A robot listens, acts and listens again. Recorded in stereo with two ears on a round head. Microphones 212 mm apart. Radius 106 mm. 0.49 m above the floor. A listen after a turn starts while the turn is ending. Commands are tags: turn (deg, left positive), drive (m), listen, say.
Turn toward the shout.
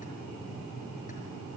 <listen/>
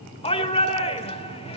<turn deg="25"/>
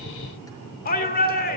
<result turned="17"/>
<turn deg="140"/>
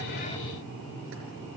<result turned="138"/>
<listen/>
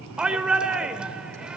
<say>Found it: a shout, straight ahead.</say>